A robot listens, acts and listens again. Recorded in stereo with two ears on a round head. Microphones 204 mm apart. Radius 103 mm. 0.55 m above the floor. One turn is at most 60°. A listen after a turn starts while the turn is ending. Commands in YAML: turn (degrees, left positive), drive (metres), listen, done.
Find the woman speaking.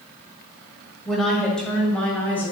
turn: 30
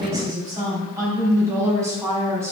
turn: -10
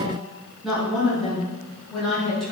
done: "Found it: a woman speaking, straight ahead, over 4 m away."